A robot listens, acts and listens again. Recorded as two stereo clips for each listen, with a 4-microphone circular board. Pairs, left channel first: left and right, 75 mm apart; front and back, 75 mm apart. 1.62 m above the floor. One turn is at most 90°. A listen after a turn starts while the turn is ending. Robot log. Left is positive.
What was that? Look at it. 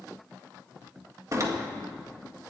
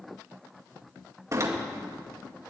note: The door slam: 135° right.
cmd yaw -90
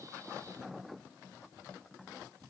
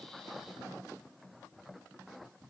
note: Nothing new. It was at 45° right.
cmd yaw -45
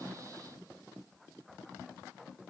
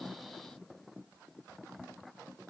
end: I heard a door slam from this way, but can't make it out now.